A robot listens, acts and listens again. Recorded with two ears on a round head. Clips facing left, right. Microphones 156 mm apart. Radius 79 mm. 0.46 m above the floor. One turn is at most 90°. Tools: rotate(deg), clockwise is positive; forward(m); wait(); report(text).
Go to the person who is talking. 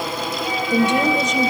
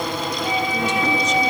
rotate(-50)
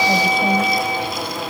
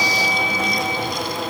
wait()
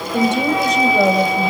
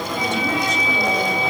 rotate(-70)
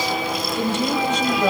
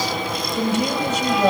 rotate(10)
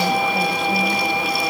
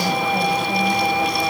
wait()
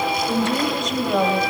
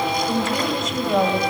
forward(1.0)
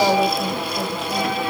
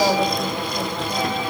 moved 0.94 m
wait()
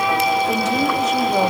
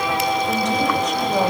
wait()
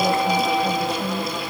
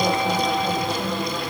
report("Facing where the woman speaking came from. I can't hear it now. I did not reach it.")